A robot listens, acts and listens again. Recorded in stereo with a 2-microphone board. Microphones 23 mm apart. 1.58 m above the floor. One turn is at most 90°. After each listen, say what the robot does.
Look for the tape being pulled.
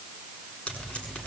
Turn 70° left.
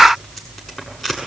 Found it: tape being pulled, straight ahead, over 4 m away.